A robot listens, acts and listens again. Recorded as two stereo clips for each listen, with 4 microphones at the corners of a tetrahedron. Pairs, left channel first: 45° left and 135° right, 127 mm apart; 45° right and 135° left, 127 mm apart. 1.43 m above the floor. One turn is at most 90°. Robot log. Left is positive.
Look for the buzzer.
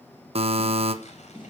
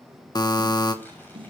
note: The buzzer: 100° right.
cmd yaw -90
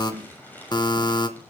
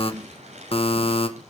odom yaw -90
note: The buzzer is now 10° right.
cmd yaw -10
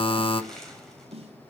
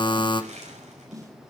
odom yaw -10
end: Found it: a buzzer, straight ahead, 1 to 2 m away.